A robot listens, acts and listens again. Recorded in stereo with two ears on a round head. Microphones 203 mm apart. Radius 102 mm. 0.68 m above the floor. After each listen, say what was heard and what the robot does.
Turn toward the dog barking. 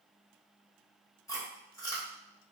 Keep listening.
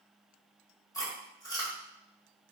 Keep listening.
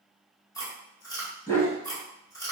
Turn 30° left.
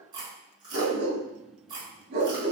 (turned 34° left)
So it is at 35° right. Turn 35° right.
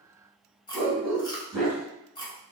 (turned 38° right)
Facing the dog barking.